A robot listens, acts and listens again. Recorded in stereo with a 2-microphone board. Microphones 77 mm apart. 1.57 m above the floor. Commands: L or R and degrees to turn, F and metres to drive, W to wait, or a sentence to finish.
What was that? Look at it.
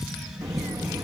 R45
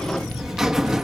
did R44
R10
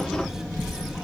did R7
Found it: a buzzer, straight ahead, 1 to 2 m away.